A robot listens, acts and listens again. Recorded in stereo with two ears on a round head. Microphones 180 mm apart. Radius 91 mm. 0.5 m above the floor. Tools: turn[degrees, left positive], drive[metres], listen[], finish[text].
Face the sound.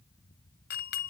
Thought: The doorbell: about 50° left or 130° left.
Action: turn[50]
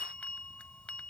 Action: finish[Found it: a doorbell, straight ahead.]